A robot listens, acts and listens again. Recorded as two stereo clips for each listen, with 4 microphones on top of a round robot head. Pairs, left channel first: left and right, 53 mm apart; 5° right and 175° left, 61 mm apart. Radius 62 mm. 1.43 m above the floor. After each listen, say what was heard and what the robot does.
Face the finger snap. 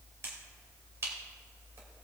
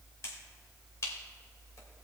The finger snap: 45° right. Turn 45° right.
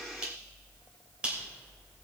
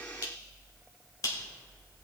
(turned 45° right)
The finger snap is now 20° right. Turn 20° right.
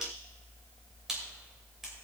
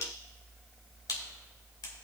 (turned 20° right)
Facing the finger snap.